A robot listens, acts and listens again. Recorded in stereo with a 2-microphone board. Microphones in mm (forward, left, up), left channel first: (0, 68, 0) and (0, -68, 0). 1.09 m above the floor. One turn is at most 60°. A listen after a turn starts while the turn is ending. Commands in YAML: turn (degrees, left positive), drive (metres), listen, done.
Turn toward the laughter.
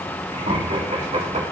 turn: -60
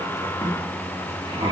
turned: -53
turn: -40
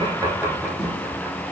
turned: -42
listen: true
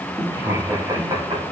turn: -30
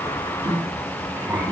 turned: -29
turn: -15
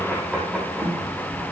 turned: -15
done: "Found it: laughter, straight ahead."